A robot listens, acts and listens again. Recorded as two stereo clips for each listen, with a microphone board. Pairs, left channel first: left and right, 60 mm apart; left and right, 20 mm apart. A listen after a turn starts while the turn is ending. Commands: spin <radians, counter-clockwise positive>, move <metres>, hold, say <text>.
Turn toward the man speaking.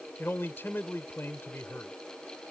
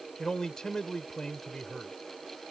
spin 0.61
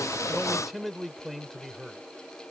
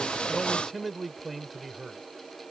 say Found it: a man speaking, straight ahead.